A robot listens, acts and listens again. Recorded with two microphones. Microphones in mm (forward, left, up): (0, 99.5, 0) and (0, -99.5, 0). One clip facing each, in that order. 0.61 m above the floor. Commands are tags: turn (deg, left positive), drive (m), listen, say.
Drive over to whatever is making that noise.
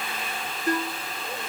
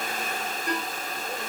<turn deg="45"/>
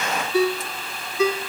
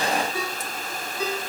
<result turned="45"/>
<turn deg="90"/>
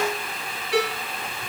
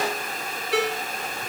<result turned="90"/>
<drive m="1.0"/>
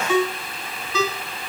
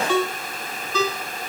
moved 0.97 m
<drive m="1.0"/>
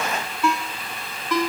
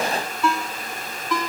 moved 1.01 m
<drive m="1.0"/>
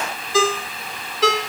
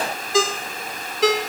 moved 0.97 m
<drive m="1.0"/>
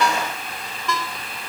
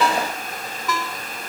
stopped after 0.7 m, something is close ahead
<say>I am next to the ringtone.</say>